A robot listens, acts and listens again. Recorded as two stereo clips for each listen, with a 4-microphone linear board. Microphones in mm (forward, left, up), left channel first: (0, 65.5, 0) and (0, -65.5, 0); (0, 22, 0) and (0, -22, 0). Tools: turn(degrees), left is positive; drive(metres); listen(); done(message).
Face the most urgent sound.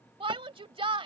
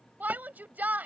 turn(degrees=-45)
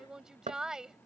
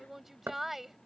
done("Found it: a shout, straight ahead.")